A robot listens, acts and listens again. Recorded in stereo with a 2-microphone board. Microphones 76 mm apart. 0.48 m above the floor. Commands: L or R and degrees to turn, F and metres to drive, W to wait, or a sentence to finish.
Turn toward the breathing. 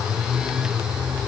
W
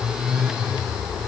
W
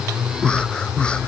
L30
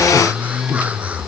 W
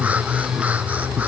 W
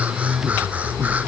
I heard breathing, but can't make it out now. It was about 15° right or 135° left.